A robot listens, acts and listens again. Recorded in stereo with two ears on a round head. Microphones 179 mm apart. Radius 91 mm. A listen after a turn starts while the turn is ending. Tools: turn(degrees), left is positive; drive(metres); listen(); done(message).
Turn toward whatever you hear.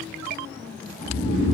turn(degrees=50)
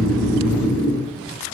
turn(degrees=80)
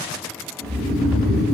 done("Facing the snoring, 1 to 2 m away.")